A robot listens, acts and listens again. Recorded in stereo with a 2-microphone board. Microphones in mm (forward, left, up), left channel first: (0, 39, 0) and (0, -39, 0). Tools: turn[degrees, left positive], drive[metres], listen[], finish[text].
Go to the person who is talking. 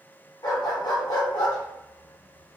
Action: listen[]
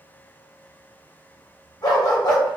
Action: listen[]
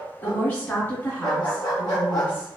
Thought: The woman speaking: about 25° left or 155° left.
Action: turn[25]
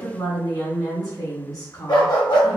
Thought: So it is at 125° left.
Action: turn[125]
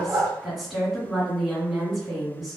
Action: drive[1.0]
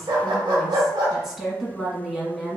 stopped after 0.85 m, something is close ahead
Thought: The woman speaking is now 10° right.
Action: turn[-10]
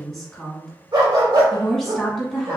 Action: finish[Arrived at the woman speaking, straight ahead.]